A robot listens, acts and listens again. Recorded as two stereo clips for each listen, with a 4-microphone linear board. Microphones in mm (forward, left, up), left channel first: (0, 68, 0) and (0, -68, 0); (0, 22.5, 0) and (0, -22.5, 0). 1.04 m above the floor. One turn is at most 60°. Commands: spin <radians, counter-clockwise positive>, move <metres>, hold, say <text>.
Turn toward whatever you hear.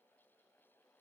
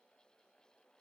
hold
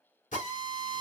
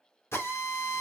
spin 1.05
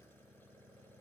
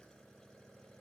hold
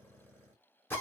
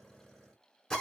spin 0.26
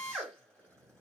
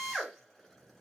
say Facing the drill.